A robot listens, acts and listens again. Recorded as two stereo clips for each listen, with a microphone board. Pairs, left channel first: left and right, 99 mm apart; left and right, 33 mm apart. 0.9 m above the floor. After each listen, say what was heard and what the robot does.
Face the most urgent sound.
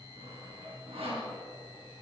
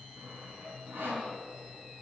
Keep listening.
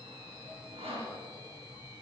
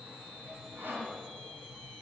Keep listening.
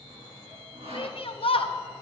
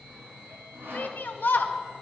The shout: about 65° left or 115° left. Turn 65° left.
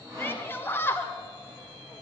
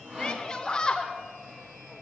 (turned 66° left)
So it is at 25° left. Turn 25° left.
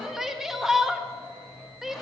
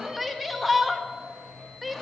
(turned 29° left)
Facing the shout.